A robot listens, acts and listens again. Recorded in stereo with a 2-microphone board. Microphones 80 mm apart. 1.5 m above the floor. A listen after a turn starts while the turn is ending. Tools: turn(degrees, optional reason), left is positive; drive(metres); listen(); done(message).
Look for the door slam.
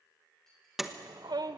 turn(degrees=-30)
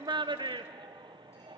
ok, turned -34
listen()
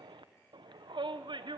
done("I heard a door slam, but can't make it out now. It was about 30° left or 145° right.")